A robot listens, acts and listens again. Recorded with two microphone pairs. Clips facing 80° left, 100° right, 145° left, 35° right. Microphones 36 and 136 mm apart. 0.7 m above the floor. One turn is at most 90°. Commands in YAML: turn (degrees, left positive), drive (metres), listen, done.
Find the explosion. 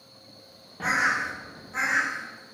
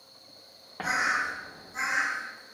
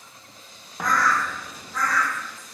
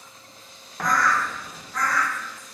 turn: -90
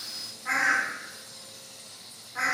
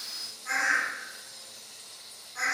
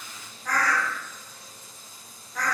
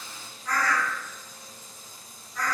turn: -50
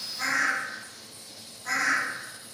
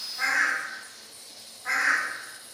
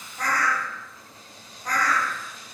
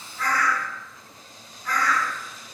done: "I heard an explosion from this way, but can't make it out now."